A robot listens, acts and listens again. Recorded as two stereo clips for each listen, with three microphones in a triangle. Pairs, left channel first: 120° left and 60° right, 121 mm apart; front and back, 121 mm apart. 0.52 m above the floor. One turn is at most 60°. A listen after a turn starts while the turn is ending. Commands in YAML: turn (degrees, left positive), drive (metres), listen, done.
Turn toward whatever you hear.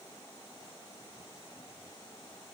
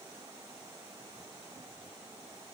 listen: true
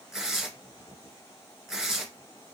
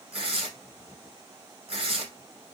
turn: -60
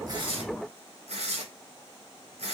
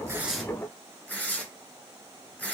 turn: -60
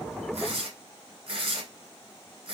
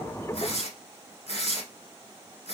turn: -20
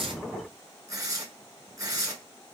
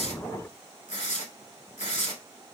done: "Facing the tearing paper."